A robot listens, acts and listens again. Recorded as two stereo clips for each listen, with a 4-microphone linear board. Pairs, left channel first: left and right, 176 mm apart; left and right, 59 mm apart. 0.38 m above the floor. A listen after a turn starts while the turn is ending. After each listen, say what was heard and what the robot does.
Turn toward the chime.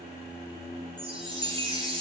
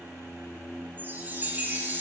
The chime: about 30° right or 150° right. Turn 30° right.
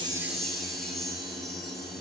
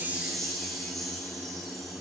Facing the chime, 1 to 2 m away.